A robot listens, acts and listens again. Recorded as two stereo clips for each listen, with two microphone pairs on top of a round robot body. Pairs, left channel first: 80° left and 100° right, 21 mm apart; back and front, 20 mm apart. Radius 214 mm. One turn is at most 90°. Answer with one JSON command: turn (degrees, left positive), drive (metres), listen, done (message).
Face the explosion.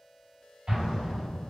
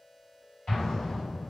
{"turn": -90}
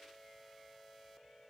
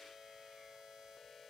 {"turn": -50}
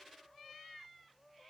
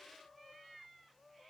{"done": "I heard an explosion from this way, but can't make it out now."}